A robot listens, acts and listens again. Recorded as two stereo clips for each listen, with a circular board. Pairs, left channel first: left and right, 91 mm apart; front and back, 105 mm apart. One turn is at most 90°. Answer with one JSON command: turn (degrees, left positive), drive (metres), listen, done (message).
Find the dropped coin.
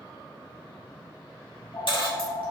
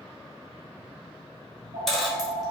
{"turn": 90}
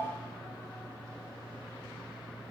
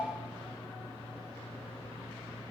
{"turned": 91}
{"done": "Facing where the dropped coin came from. I can't hear it now."}